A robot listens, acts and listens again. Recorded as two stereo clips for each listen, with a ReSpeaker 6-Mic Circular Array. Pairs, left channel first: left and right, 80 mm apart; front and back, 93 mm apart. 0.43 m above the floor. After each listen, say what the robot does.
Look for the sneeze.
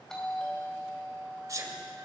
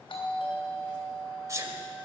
Turn 130° right.
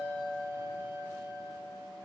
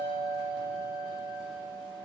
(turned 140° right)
Turn 10° left.
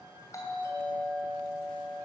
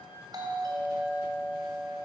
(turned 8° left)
Facing where the sneeze came from. I can't hear it now.